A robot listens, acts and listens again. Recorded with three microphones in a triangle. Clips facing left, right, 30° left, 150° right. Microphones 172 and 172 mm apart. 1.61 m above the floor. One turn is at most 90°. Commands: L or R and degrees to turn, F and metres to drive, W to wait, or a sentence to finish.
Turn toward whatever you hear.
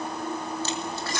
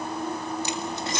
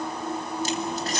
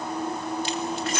R25
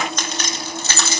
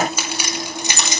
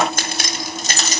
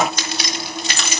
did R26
R20
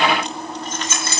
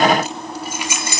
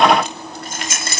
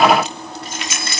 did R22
R15
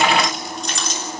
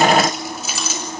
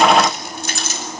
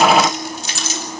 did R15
Facing the keys jangling.